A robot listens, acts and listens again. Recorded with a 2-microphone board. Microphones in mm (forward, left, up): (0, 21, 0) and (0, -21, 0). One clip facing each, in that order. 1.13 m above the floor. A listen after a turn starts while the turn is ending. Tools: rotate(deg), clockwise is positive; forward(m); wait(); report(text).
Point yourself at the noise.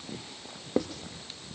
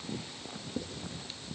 rotate(-75)
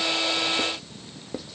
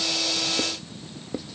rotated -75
report("Found it: writing, straight ahead, under 1 m away.")